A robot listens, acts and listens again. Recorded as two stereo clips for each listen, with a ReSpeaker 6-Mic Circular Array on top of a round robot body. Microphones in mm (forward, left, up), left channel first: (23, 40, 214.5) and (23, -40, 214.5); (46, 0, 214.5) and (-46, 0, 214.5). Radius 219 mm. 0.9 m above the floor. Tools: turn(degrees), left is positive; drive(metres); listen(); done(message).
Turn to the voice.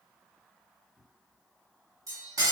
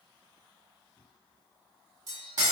listen()
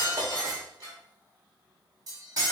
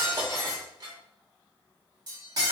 listen()
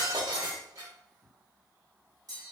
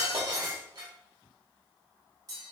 done("I can't make out anyone speaking to turn to.")